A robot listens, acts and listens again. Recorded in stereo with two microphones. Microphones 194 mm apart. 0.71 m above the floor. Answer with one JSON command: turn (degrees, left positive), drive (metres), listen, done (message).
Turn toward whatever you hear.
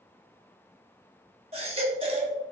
{"turn": -30}
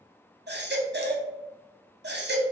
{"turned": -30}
{"turn": -115}
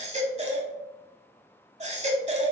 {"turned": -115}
{"turn": -35}
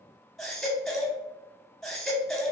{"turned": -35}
{"done": "Facing the baby crying."}